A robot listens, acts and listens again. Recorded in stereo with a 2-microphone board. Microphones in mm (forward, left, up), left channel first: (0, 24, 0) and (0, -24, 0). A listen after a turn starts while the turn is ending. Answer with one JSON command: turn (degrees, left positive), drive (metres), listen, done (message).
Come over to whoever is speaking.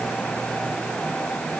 {"listen": true}
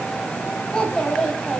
{"turn": 25}
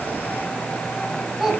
{"drive": 1.0}
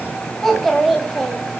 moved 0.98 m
{"drive": 1.0}
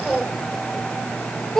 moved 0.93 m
{"turn": 10}
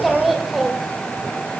{"drive": 1.0}
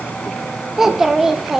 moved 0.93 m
{"drive": 1.0}
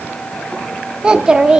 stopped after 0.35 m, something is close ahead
{"turn": -15}
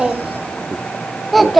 {"done": "I am next to the child speaking."}